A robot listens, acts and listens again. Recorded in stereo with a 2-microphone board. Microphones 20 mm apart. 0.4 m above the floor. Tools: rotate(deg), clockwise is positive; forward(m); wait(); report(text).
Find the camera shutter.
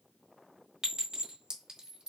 wait()
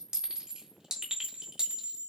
wait()
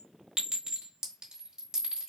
report("I can't make out a camera shutter, only a clink.")